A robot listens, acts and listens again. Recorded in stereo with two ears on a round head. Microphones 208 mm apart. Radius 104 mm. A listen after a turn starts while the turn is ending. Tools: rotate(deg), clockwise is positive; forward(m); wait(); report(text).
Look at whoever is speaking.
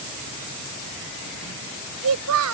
rotate(90)
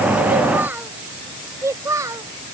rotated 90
rotate(15)
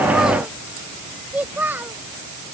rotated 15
rotate(10)
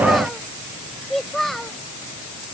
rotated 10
report("Found it: a child speaking, straight ahead.")